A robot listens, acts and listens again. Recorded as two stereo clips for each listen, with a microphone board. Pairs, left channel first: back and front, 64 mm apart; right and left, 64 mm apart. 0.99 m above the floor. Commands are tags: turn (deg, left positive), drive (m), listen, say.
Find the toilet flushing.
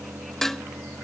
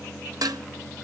<listen/>
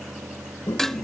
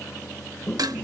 <turn deg="180"/>
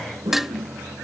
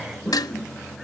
<say>Found it: a toilet flushing, straight ahead.</say>